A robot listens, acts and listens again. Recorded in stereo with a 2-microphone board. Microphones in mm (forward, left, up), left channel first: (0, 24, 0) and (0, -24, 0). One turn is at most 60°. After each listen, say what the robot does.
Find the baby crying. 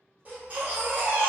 Turn 30° right.
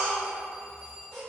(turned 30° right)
Found it: a baby crying, straight ahead.